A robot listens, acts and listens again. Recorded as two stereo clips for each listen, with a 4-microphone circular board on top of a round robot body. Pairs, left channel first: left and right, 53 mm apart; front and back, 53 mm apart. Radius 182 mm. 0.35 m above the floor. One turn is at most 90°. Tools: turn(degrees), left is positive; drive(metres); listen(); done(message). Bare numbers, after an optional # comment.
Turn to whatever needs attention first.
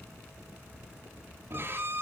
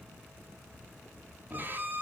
listen()
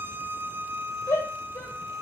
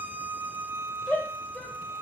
# The shout: 65° left.
turn(65)
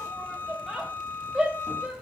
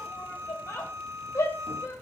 # The shout is now 15° right.
turn(-15)
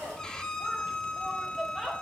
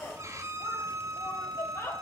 done("Facing the shout.")